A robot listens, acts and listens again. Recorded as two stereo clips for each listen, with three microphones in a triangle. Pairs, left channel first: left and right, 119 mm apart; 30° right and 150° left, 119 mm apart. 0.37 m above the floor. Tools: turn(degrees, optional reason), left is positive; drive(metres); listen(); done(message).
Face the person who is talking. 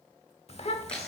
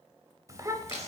turn(degrees=95, reason="The child speaking: 95° left.")
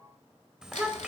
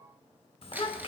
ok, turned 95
done("Found it: a child speaking, straight ahead, under 1 m away.")